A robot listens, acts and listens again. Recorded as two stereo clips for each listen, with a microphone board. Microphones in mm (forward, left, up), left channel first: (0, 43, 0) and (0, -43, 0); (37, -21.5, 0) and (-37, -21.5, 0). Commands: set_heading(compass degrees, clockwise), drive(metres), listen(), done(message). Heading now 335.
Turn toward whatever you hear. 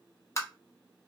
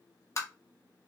set_heading(295)
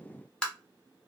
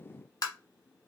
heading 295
set_heading(285)
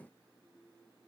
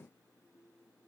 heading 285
listen()
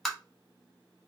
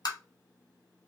done("Found it: tapping, straight ahead, under 1 m away.")